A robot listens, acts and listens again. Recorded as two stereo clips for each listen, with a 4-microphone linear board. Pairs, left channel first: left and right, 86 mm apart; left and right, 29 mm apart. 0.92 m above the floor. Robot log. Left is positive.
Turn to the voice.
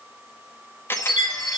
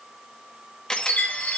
cmd idle
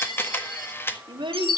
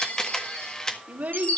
note: The child speaking: about 70° right or 110° right.
cmd yaw -70
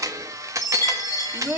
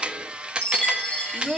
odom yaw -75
note: So it is at 35° right.
cmd yaw -35
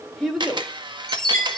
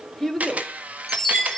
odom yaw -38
end: Found it: a child speaking, straight ahead.